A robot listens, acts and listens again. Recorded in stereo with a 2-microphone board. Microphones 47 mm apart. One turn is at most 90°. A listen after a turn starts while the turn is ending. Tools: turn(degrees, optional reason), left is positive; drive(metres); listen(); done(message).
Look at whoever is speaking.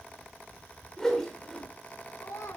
turn(degrees=90)
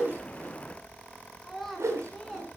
done("Facing the child speaking, over 4 m away.")